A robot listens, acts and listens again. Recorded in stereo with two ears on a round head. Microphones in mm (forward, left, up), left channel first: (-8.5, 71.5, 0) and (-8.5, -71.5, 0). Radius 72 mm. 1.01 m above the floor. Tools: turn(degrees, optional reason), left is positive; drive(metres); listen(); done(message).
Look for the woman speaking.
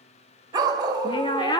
turn(degrees=25, reason="The woman speaking: about 25° left or 155° left.")
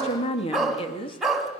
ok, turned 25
turn(degrees=30, reason="The woman speaking: about 30° left or 150° left.")
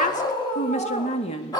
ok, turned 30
turn(degrees=40, reason="The woman speaking: about 40° left or 140° left.")
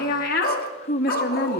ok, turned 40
turn(degrees=120, reason="So it is at 120° left.")
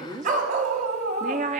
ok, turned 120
turn(degrees=-45, reason="The woman speaking is now 45° right.")
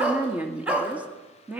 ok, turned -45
turn(degrees=-10, reason="The woman speaking is now 10° right.")
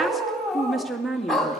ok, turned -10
done("Facing the woman speaking, 2 to 4 m away.")